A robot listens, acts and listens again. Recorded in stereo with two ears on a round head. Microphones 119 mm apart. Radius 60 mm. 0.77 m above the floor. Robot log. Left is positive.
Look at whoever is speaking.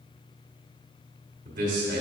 note: The man speaking: about 70° right or 110° right.
cmd yaw -70
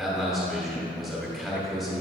end: Facing the man speaking.